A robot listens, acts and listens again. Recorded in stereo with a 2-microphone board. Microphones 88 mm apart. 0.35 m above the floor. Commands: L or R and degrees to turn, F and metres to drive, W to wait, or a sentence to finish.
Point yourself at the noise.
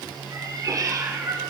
R35
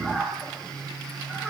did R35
Found it: a cat meowing, straight ahead.